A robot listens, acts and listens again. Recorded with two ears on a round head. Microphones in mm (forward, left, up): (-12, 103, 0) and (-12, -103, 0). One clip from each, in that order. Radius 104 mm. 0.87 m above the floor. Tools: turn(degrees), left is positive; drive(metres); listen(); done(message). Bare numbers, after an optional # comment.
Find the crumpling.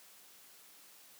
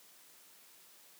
listen()
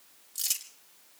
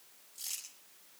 # The crumpling: about 65° left or 115° left.
turn(65)
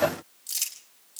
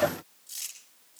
# So it is at 50° left.
turn(50)
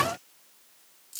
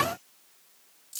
done("Found it: crumpling, straight ahead, over 4 m away.")